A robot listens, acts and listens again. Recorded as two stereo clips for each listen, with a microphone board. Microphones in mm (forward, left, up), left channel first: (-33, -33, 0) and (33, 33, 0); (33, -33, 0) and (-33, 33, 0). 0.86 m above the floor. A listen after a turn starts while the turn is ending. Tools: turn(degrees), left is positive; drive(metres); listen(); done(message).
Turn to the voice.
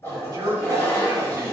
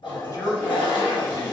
done("Found it: a man speaking, straight ahead.")